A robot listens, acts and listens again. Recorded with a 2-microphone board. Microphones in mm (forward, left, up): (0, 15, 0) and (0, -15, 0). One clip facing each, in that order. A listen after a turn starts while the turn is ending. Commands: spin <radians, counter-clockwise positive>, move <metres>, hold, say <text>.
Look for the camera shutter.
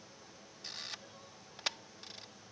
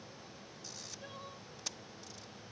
spin 0.96
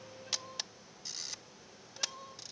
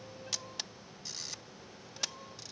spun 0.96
say Found it: a camera shutter, straight ahead.